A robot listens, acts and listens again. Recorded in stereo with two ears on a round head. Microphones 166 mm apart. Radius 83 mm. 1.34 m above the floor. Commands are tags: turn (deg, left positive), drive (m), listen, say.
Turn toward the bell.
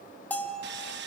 <turn deg="30"/>
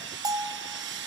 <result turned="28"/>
<turn deg="-20"/>
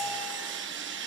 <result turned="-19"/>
<listen/>
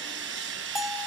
<say>Found it: a bell, straight ahead, 1 to 2 m away.</say>